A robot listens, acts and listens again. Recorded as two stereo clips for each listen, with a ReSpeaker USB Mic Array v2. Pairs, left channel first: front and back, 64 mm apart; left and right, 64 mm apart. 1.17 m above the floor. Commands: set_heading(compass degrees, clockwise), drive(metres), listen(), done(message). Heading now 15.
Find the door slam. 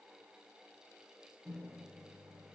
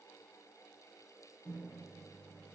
listen()
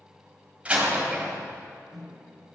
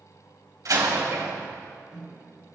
set_heading(125)
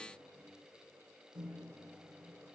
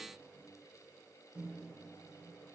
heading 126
done("Facing where the door slam came from. I can't hear it now.")